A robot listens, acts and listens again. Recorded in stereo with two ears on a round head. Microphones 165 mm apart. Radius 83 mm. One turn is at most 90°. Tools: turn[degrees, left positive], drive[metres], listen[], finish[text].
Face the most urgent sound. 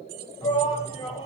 Thought: The shout: about 25° left or 155° left.
Action: turn[25]
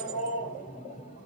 Thought: So it is at 130° left.
Action: turn[90]
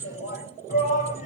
Thought: The shout is now 45° left.
Action: turn[45]
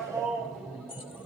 Action: finish[Found it: a shout, straight ahead.]